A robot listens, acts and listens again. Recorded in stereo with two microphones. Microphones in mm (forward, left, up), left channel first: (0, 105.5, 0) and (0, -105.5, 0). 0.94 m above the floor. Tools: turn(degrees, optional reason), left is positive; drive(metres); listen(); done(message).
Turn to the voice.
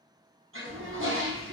turn(degrees=-65, reason="The child speaking: about 65° right or 115° right.")
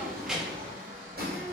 done("Found it: a child speaking, straight ahead, under 1 m away.")